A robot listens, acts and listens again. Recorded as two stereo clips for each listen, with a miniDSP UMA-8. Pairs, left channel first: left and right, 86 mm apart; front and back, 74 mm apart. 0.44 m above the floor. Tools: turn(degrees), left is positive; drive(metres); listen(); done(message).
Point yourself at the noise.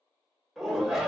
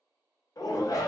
done("Facing the shout.")